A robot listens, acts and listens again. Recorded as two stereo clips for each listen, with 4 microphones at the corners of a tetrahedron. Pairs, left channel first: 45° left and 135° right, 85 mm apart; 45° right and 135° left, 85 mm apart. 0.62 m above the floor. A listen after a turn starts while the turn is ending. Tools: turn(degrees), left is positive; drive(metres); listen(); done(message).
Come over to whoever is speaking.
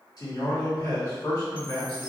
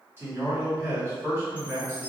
turn(degrees=75)
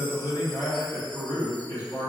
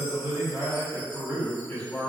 turn(degrees=15)
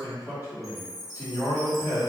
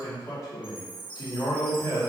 drive(metres=1.0)
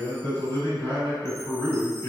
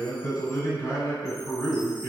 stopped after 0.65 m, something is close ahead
done("Arrived at the man speaking, straight ahead.")